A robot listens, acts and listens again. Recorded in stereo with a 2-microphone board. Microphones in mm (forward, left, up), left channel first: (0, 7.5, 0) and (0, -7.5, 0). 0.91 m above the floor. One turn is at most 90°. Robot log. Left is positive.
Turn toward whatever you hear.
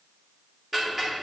note: The ticking: about 25° right or 155° right.
cmd yaw -25
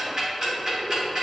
note: So it is at 135° right.
cmd yaw -90
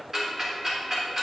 note: The ticking is now 10° right.
cmd yaw -10
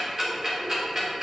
end: Found it: ticking, straight ahead, 2 to 4 m away.